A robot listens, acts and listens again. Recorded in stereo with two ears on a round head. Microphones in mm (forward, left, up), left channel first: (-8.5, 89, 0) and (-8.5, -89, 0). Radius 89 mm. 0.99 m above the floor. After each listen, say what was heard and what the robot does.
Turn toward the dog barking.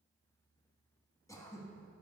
Keep listening.
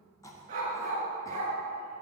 The dog barking: about 35° right or 145° right. Turn 35° right.
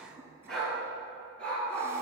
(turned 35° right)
Found it: a dog barking, straight ahead.